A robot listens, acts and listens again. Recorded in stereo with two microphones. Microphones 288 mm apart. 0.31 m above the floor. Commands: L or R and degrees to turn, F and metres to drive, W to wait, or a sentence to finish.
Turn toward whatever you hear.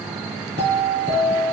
R35
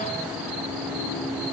W
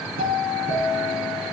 R110
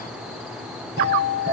R35
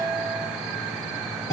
R10
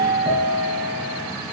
Facing the doorbell.